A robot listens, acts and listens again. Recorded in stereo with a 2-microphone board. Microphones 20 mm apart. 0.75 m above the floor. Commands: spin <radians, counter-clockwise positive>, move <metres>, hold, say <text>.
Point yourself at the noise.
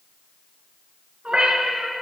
spin -1.05
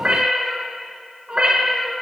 spin -0.87
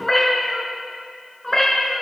spin 0.44
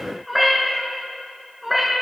say Found it: a cat meowing, straight ahead.